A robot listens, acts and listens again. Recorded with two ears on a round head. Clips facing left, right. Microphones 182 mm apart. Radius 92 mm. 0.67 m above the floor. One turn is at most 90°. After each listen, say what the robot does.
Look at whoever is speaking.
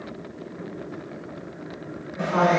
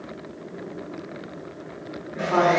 Turn 70° right.
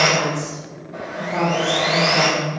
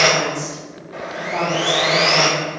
Turn 20° right.
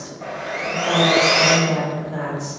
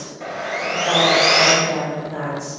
Found it: a woman speaking, straight ahead, 1 to 2 m away.